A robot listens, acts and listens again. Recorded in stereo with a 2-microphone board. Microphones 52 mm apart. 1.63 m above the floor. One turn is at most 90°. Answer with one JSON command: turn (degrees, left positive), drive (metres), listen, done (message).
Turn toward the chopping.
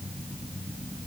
{"listen": true}
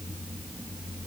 {"listen": true}
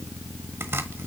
{"turn": -55}
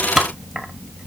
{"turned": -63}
{"turn": -10}
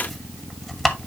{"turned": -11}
{"done": "Facing the chopping."}